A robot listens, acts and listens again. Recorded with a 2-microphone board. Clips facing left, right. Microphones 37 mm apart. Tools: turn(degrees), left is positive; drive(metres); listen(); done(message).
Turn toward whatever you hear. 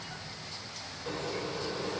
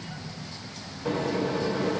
turn(degrees=-50)
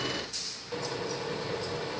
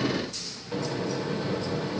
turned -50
done("Found it: a microwave, straight ahead, under 1 m away.")